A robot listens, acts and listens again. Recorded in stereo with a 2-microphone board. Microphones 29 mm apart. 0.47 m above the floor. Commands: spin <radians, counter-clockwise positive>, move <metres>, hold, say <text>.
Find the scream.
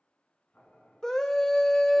spin 0.35
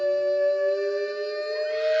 say Facing the scream.